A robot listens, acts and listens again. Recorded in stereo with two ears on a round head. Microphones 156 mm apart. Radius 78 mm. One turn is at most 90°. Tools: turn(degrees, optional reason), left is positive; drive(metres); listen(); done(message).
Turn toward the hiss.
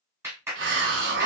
turn(degrees=-75, reason="The hiss: about 75° right or 105° right.")
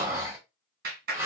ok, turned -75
turn(degrees=-15, reason="So it is at 15° right.")
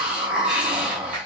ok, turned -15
done("Facing the hiss.")